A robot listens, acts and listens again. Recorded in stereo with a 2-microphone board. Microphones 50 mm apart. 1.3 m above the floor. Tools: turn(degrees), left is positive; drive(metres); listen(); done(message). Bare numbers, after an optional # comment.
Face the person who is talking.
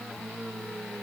listen()
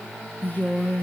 # The woman speaking: about 45° left or 135° left.
turn(45)
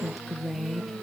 done("Found it: a woman speaking, straight ahead, 1 to 2 m away.")